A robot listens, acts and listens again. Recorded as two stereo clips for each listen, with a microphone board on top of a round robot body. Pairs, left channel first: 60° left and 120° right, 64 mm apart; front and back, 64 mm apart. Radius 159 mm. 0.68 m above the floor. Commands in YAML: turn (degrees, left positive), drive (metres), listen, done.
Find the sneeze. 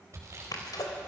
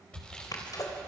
turn: 35
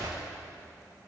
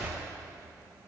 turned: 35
done: "Facing where the sneeze came from. I can't hear it now."